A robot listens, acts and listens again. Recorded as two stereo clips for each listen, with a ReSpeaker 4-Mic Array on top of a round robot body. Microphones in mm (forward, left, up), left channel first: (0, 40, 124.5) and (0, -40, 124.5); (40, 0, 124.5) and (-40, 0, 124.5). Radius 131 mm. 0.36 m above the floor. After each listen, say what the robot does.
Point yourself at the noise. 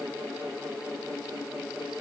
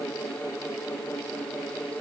Keep listening.
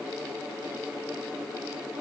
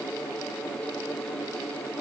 Keep listening.
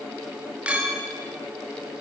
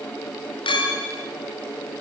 Turn 15° right.
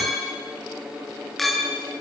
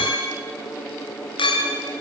Facing the clink.